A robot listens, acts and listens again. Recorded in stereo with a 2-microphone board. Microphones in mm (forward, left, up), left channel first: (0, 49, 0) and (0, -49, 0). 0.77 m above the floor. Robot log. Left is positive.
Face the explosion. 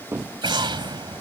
note: The explosion: about 55° right or 125° right.
cmd yaw -55
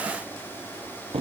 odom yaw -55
cmd idle
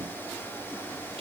end: I heard an explosion, but can't make it out now. It was about straight ahead or 70° right.